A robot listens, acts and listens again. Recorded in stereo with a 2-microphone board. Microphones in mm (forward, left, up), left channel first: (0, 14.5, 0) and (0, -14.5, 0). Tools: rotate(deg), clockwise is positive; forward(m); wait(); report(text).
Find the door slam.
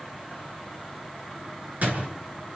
rotate(65)
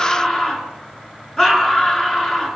wait()
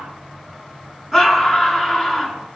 report("I heard a door slam, but can't make it out now. It was about straight ahead or 50° right.")